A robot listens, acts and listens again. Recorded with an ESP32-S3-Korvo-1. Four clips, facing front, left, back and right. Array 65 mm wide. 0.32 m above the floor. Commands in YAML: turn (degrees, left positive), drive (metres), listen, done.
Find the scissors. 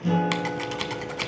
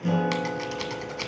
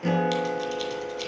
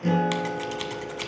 turn: 10
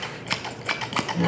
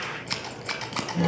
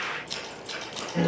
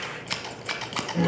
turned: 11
done: "Found it: scissors, straight ahead, 1 to 2 m away."